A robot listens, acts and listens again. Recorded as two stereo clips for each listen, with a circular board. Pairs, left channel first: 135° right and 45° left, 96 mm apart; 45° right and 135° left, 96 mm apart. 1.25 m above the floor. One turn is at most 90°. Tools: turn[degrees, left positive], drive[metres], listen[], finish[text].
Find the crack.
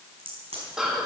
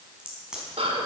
Thought: The crack: 50° left.
Action: turn[50]
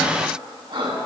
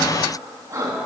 Action: finish[Facing where the crack came from. I can't hear it now.]